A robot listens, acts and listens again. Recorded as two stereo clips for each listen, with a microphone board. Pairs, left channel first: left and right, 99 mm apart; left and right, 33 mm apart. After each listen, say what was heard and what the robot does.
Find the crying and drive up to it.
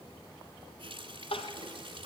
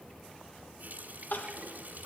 The crying: about 70° left or 110° left. Turn 70° left.
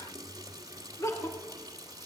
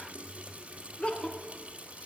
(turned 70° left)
So it is at 30° left. Turn 30° left.
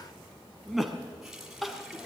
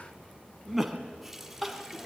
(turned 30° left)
Drive 1.0 m forward.
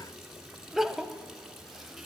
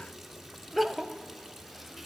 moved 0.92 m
Drive 1.0 m forward.
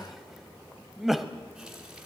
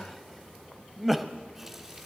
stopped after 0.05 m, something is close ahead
I am next to the crying.